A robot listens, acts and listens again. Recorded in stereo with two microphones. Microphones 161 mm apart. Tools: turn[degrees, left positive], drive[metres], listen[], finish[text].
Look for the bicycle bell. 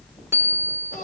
Thought: The bicycle bell: about 15° right or 165° right.
Action: turn[-15]
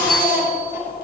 Action: listen[]
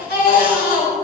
Action: listen[]
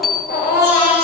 Action: finish[Found it: a bicycle bell, straight ahead.]